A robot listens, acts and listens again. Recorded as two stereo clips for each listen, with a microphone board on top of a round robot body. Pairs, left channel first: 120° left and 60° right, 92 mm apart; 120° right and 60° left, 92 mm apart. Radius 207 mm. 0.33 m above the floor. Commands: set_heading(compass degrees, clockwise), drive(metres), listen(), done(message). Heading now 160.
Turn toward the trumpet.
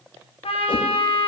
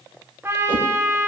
set_heading(35)
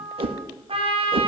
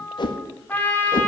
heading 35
set_heading(85)
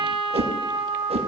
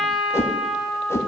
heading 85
set_heading(110)
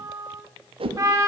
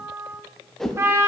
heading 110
done("Found it: a trumpet, straight ahead.")